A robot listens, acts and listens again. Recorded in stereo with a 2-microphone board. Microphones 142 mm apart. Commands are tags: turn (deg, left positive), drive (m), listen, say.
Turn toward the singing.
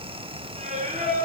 <turn deg="-50"/>
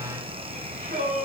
<turn deg="-75"/>
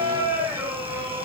<turn deg="-20"/>
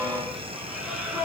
<say>Facing the singing.</say>